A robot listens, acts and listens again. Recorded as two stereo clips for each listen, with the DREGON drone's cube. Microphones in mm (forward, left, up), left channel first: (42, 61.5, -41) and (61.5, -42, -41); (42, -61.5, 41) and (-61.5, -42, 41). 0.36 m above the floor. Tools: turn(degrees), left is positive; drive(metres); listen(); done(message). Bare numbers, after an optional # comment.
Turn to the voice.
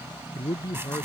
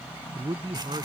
# The man speaking: 150° left.
turn(150)
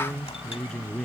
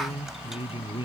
# The man speaking is now 15° left.
turn(15)
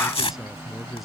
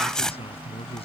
done("Found it: a man speaking, straight ahead.")